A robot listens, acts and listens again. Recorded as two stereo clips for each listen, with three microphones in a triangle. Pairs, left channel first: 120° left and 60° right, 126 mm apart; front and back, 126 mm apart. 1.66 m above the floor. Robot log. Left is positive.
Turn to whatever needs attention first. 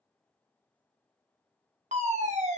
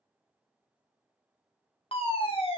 note: The fire alarm: 40° right.
cmd yaw -40
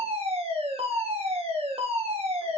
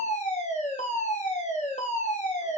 note: The fire alarm is now 20° right.
cmd yaw -20
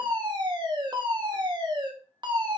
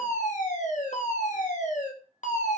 end: Found it: a fire alarm, straight ahead, 1 to 2 m away.